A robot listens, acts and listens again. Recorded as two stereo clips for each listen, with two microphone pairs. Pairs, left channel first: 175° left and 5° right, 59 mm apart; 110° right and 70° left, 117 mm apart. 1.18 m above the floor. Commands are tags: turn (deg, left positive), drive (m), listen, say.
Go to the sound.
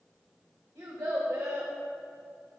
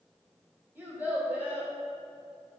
<drive m="1.0"/>
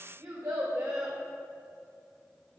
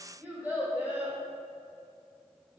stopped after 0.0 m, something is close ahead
<say>Blocked. The child speaking is further on, straight ahead.</say>